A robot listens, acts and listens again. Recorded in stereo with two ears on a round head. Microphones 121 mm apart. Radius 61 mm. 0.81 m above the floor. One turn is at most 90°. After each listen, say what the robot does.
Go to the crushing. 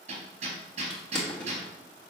Turn 30° left.
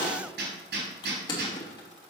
Turn 90° left.
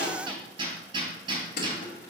Turn 85° left.
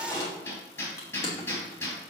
Turn 25° left.
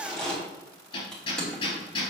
Drive 1.0 m forward.
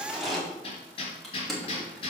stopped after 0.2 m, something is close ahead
Something is in my way. I am facing the crushing but have not reached it.